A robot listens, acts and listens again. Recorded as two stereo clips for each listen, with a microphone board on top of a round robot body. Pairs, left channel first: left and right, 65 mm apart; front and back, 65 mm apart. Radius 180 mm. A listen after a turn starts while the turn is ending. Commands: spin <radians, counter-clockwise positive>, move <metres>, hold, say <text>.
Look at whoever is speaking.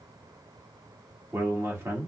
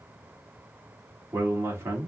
spin -2.36
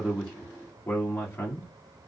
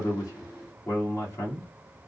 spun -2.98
spin 0.61
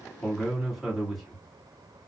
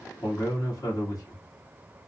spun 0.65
say Found it: a man speaking, straight ahead.